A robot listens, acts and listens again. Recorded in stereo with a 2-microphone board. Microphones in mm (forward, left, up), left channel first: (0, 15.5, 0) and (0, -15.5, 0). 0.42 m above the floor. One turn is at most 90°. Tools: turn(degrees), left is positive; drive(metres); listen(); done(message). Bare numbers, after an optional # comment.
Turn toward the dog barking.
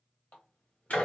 listen()
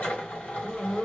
# The dog barking: about 35° left or 145° left.
turn(35)
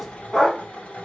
# So it is at 10° left.
turn(10)
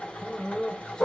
# The dog barking is now 20° left.
turn(20)
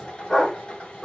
# The dog barking is now 15° left.
turn(15)
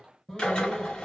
listen()
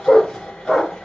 # The dog barking is now 15° left.
turn(15)
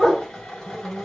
done("Found it: a dog barking, straight ahead, 2 to 4 m away.")